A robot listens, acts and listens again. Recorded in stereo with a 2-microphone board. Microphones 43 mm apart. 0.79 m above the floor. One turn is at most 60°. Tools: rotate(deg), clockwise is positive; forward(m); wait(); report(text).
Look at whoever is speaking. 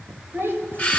rotate(55)
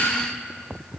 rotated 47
wait()
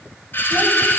wait()
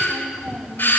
rotate(10)
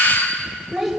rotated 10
report("Facing the child speaking, 2 to 4 m away.")